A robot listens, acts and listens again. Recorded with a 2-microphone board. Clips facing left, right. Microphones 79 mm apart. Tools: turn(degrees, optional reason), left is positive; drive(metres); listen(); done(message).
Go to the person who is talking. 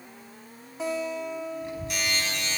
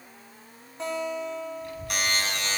turn(degrees=25, reason="The child speaking: about 25° left or 155° left.")
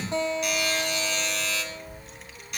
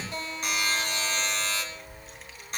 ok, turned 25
drive(metres=1.0)
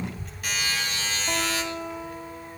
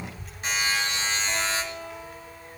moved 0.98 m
drive(metres=1.0)
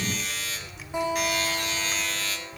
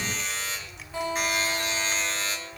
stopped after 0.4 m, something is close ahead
done("Arrived at the child speaking, straight ahead.")